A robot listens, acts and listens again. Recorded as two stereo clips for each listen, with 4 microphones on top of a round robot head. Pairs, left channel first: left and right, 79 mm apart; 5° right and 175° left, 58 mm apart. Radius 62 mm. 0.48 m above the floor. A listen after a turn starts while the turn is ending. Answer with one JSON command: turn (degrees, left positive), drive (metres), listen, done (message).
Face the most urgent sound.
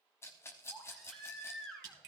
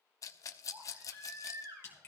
{"turn": 175}
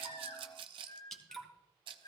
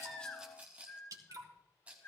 {"turn": 40}
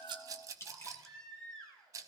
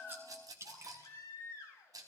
{"turn": 10}
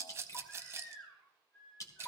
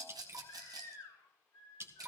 {"done": "Facing the baby crying."}